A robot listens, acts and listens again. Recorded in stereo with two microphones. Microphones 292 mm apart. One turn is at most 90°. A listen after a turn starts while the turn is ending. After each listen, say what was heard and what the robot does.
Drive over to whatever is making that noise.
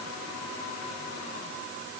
Keep listening.
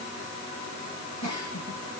The giggle: about 65° left or 115° left. Turn 65° left.
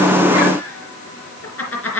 So it is at 50° left. Turn 50° left.
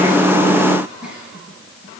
Drive 1.0 m forward.
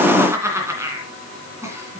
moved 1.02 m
The giggle is now 10° right. Turn 10° right.
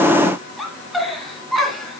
Drive 1.0 m forward.
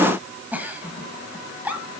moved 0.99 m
Drive 1.0 m forward.
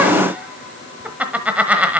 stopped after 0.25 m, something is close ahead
Arrived at the giggle, straight ahead.